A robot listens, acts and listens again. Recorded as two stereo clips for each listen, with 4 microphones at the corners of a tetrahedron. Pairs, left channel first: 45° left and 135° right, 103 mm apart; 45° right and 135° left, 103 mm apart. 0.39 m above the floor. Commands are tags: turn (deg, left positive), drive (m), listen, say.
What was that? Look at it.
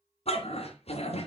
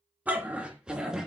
<turn deg="50"/>
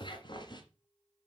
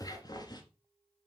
<say>Found it: a dog barking, straight ahead, 1 to 2 m away.</say>